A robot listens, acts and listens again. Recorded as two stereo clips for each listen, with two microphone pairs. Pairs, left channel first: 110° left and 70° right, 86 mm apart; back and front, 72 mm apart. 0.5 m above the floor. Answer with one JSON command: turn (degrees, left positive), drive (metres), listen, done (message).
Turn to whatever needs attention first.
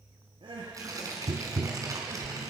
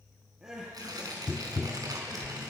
{"turn": -80}
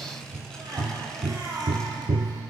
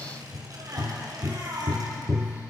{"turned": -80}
{"turn": -30}
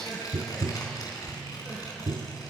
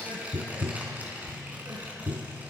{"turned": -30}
{"listen": true}
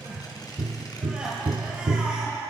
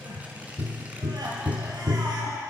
{"turn": 10}
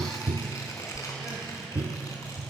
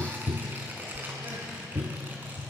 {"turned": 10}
{"listen": true}
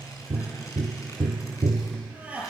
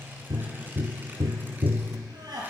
{"done": "Found it: crying, straight ahead."}